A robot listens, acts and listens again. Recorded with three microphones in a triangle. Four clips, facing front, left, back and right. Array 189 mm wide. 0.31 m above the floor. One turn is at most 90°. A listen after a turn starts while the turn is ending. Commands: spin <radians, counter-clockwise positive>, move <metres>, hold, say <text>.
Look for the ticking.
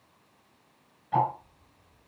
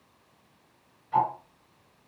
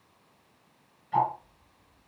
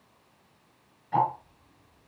spin -0.61
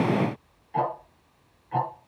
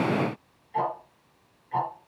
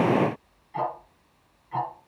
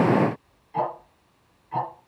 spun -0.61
spin -0.17
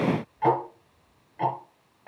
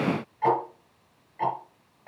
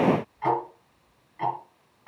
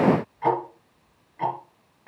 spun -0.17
say Found it: ticking, straight ahead, 2 to 4 m away.